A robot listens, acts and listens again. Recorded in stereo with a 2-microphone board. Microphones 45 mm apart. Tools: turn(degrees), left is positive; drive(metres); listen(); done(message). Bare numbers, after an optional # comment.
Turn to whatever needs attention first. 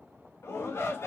turn(90)
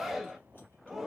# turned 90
done("Found it: a shout, straight ahead, 1 to 2 m away.")